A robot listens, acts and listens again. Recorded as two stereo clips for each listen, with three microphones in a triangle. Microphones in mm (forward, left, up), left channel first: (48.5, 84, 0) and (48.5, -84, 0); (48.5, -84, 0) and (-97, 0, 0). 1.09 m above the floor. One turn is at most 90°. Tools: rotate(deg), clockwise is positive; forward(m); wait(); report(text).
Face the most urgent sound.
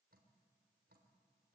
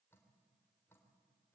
wait()
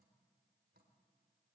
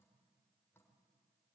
wait()
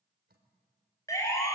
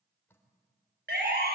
rotate(-90)
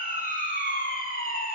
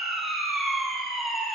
rotate(-60)
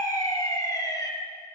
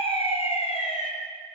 rotate(-20)
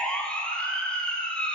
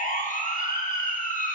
report("Facing the siren.")